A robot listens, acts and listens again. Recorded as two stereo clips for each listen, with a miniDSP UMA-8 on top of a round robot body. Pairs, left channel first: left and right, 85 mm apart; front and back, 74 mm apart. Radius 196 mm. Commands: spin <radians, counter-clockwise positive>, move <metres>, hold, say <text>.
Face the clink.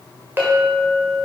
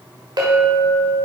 spin -2.71
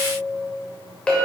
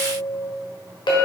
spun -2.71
spin 0.17
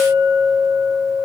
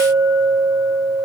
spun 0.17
say Facing the clink, 1 to 2 m away.